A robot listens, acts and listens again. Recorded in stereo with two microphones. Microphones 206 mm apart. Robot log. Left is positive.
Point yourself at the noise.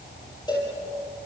note: The cowbell: about 20° left or 160° left.
cmd yaw +20
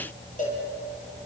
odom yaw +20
note: So it is at 140° left.
cmd yaw +140
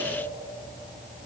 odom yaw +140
cmd idle
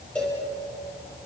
end: Found it: a cowbell, straight ahead.